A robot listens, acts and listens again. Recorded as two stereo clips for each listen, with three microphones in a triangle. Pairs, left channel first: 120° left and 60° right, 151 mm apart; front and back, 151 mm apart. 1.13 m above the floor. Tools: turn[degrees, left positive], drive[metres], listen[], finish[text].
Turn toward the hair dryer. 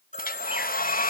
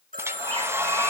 Thought: The hair dryer: 105° left.
Action: turn[105]
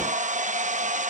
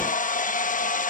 Thought: The hair dryer is now 25° right.
Action: turn[-25]
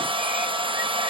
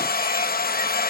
Action: finish[Found it: a hair dryer, straight ahead.]